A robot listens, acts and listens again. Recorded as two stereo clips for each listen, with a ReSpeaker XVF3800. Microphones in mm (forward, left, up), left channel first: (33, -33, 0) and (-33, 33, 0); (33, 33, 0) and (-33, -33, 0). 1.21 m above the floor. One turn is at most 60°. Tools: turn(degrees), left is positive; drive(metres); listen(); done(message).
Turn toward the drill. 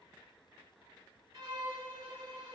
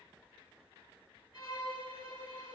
listen()
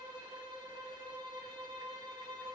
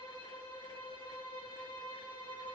listen()
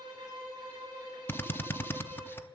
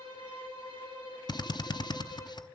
turn(degrees=20)
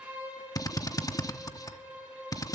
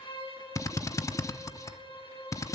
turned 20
done("Facing the drill, under 1 m away.")